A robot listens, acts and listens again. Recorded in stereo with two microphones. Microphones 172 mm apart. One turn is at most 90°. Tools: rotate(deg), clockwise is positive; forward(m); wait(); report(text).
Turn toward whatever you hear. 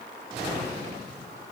wait()
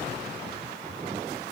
wait()
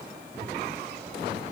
report("I can't make out anything.")